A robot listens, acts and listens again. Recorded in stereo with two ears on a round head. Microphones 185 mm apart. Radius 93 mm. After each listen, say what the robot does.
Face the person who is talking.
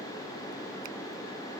Keep listening.
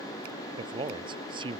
Turn 25° right.
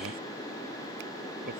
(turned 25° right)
Turn 130° right.
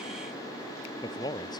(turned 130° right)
Turn 20° left.
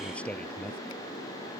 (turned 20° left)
Found it: a man speaking, straight ahead.